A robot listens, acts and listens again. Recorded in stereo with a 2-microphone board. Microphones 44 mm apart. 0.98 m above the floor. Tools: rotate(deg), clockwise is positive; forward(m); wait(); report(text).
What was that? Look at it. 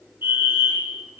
rotate(65)
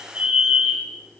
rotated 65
rotate(35)
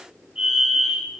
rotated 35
rotate(15)
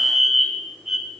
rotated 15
report("Found it: a fire alarm, straight ahead.")